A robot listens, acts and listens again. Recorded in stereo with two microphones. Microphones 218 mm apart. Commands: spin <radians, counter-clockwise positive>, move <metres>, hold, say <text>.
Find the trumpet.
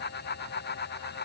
hold
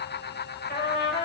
spin 0.87
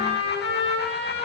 spin 1.40
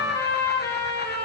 spin 0.26
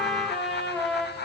say Found it: a trumpet, straight ahead, over 4 m away.